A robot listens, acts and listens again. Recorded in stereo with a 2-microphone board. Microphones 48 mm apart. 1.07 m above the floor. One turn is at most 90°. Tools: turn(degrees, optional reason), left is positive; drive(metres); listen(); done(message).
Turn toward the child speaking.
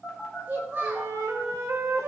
turn(degrees=-40, reason="The child speaking: about 40° right or 140° right.")
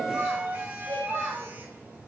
turn(degrees=-90, reason="So it is at 115° right.")
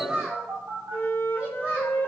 turn(degrees=-35, reason="The child speaking is now 35° right.")
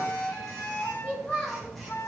turn(degrees=20, reason="The child speaking is now 20° left.")
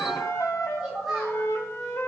done("Found it: a child speaking, straight ahead, over 4 m away.")